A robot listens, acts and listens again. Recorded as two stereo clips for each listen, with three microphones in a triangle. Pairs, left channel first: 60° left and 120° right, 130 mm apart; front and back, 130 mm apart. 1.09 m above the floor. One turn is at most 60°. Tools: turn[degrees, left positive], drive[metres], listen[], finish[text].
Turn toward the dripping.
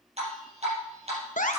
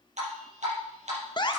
Thought: The dripping: 155° right.
Action: turn[-60]
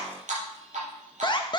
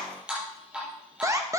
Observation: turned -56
Thought: The dripping is now 100° right.
Action: turn[-60]
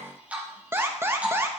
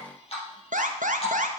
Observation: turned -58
Thought: The dripping is now 40° right.
Action: turn[-40]
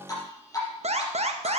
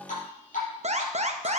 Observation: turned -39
Action: finish[Found it: dripping, straight ahead.]